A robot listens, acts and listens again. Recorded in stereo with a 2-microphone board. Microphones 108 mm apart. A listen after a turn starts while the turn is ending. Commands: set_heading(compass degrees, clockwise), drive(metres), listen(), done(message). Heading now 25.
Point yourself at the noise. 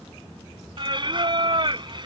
set_heading(75)
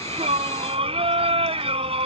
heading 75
set_heading(150)
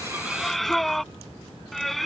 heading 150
done("Facing the singing.")